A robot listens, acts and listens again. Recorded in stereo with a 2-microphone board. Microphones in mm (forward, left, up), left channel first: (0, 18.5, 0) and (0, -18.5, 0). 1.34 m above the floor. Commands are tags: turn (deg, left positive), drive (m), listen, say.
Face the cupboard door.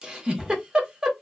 <turn deg="-30"/>
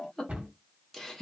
<turn deg="-140"/>
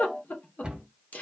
<turn deg="-30"/>
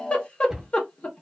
<say>Found it: a cupboard door, straight ahead.</say>